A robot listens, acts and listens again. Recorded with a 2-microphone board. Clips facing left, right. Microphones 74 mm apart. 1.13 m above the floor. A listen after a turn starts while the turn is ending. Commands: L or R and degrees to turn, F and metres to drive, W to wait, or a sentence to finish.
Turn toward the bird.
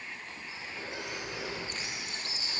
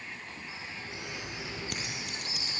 R25
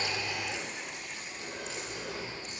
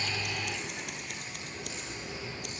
W
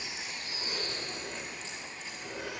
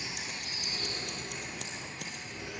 Found it: a bird, straight ahead, over 4 m away.